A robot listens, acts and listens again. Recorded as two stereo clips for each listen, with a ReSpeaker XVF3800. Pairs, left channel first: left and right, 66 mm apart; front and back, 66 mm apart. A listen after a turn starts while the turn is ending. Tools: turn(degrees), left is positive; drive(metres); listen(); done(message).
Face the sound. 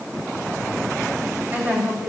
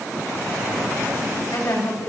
turn(degrees=-30)
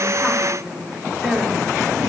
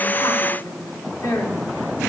done("Found it: a woman speaking, straight ahead.")